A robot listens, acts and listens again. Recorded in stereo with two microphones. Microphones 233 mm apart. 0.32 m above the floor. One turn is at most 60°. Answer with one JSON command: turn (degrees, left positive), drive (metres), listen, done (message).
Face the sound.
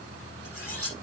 {"turn": -60}
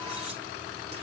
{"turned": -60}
{"turn": -30}
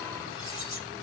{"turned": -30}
{"turn": 15}
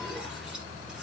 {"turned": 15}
{"listen": true}
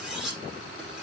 {"done": "Found it: cutlery clinking, straight ahead, over 4 m away."}